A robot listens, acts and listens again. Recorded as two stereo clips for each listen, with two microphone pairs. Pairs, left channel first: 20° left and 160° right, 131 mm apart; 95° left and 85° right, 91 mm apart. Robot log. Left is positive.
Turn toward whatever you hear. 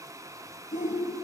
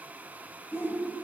note: The shout: 30° left.
cmd yaw +30
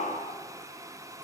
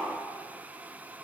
note: The shout is now 10° left.
cmd yaw +10
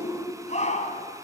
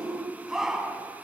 end: Found it: a shout, straight ahead.